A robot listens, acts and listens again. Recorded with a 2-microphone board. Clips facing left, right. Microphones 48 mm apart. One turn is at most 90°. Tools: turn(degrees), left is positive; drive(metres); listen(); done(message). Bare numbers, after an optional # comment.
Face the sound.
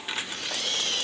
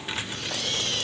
listen()
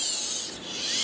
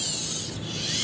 listen()
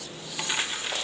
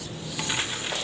done("I can't make out anything.")